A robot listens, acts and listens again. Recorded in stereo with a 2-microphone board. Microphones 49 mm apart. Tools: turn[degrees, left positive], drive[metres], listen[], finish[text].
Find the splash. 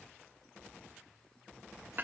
Action: listen[]
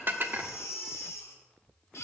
Action: listen[]
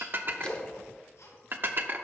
Thought: The splash: about 20° left or 160° left.
Action: turn[20]
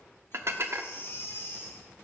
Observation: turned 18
Action: listen[]
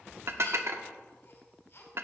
Action: finish[I heard a splash, but can't make it out now. It was about 5° left or 140° left.]